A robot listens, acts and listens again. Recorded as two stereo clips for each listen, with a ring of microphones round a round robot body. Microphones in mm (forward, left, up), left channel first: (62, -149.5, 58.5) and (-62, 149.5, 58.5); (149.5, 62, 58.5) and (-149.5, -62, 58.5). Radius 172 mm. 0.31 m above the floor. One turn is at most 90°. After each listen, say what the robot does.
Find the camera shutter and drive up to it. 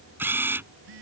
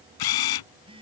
Turn 30° left.
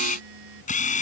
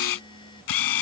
Drive 1.0 m forward.
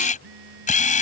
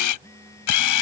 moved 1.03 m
Drive 1.0 m forward.
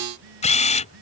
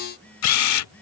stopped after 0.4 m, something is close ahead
I am next to the camera shutter.